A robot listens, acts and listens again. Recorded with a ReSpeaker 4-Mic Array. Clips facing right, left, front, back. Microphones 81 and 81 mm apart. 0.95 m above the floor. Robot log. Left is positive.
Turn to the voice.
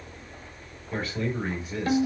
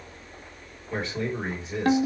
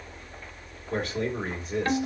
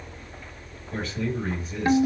note: The man speaking: 25° left.
cmd yaw +25
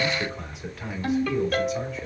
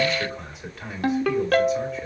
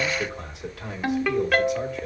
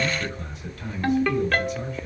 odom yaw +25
end: Facing the man speaking, 2 to 4 m away.